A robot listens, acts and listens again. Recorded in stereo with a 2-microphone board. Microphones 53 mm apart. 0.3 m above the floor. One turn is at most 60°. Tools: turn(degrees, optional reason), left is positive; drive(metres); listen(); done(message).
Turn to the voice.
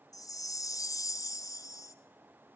listen()
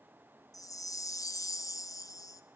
listen()
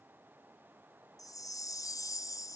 done("I can't make out anyone speaking, only a chime.")